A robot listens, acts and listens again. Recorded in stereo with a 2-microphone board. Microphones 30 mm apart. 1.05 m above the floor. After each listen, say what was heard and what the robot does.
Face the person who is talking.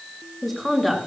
Turn 30° left.
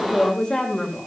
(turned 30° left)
So it is at 150° left. Turn 150° left.
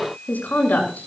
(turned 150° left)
The woman speaking is now 80° left. Turn 80° left.
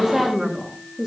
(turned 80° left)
The woman speaking is now 20° right. Turn 20° right.
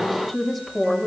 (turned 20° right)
Found it: a woman speaking, straight ahead.